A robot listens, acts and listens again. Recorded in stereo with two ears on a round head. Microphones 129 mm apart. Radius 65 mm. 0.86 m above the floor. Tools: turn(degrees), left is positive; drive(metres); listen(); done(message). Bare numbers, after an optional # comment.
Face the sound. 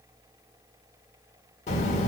# The child speaking: about 55° left or 125° left.
turn(55)
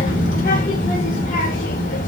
# So it is at 65° left.
turn(65)
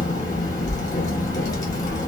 # The child speaking is now 25° left.
turn(25)
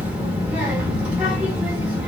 # The child speaking is now 10° right.
turn(-10)
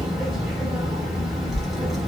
done("Facing the child speaking, under 1 m away.")